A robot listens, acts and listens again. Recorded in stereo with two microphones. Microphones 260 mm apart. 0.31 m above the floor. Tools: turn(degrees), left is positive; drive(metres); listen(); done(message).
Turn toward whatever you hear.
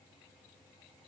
listen()
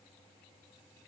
listen()
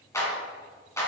turn(degrees=30)
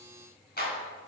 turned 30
turn(degrees=140)
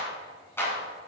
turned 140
turn(degrees=10)
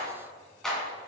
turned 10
done("Found it: a clap, straight ahead.")